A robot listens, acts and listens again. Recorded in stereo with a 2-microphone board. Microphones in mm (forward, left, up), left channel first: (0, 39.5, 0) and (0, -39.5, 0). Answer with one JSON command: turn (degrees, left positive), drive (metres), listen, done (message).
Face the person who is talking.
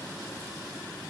{"listen": true}
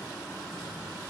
{"listen": true}
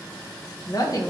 {"turn": 50}
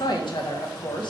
{"turn": 80}
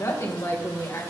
{"turn": 40}
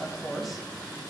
{"done": "Facing the woman speaking, 1 to 2 m away."}